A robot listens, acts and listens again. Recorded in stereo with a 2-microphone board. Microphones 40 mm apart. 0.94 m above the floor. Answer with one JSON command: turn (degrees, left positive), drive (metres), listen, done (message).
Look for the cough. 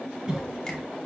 {"turn": -20}
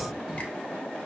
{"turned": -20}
{"listen": true}
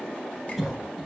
{"done": "Found it: a cough, straight ahead, under 1 m away."}